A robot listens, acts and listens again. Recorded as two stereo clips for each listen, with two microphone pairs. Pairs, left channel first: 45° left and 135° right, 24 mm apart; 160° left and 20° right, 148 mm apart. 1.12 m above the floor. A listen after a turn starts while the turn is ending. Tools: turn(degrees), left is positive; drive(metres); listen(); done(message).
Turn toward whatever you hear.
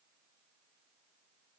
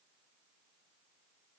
listen()
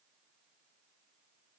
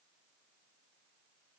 listen()
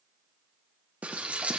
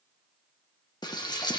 turn(degrees=-140)
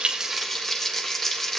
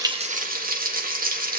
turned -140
turn(degrees=-30)
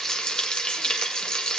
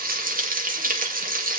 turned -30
turn(degrees=-10)
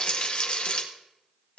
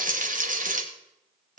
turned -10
done("Found it: frying, straight ahead, 1 to 2 m away.")